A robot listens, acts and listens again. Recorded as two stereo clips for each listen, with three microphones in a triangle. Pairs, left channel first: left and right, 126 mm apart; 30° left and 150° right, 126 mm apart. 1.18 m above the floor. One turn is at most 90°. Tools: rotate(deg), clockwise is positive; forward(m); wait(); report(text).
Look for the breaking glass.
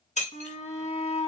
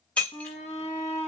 rotate(-90)
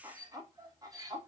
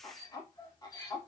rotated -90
rotate(-20)
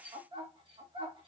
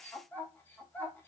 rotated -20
report("I heard breaking glass from this way, but can't make it out now.")